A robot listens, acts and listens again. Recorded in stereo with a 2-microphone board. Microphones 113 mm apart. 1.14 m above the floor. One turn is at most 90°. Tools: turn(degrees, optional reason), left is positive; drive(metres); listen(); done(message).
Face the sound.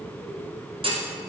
turn(degrees=-55, reason="The clunk: about 55° right or 125° right.")
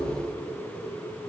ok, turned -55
listen()
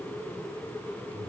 done("I heard a clunk, but can't make it out now. It was about straight ahead or 70° right.")